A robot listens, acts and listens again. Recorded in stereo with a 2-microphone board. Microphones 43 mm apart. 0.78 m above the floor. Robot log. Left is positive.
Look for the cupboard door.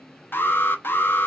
cmd idle
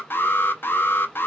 cmd idle
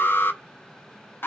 end: I can't make out a cupboard door to turn to.